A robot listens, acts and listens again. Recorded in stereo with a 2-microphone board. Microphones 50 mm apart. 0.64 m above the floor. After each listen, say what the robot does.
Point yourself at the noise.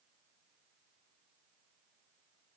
Keep listening.
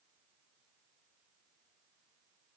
Keep listening.
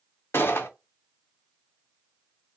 Turn 60° left.
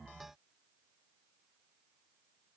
Keep listening.
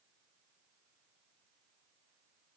I heard a gunshot, but can't make it out now. It was about straight ahead or 60° left.